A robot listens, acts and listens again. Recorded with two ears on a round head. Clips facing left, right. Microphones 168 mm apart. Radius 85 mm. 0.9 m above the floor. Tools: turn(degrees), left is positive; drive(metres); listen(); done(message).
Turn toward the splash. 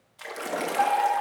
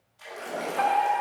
turn(degrees=70)
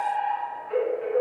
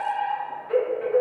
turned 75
listen()
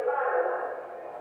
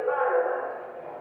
done("I heard a splash, but can't make it out now. It was about 5° right or 35° left.")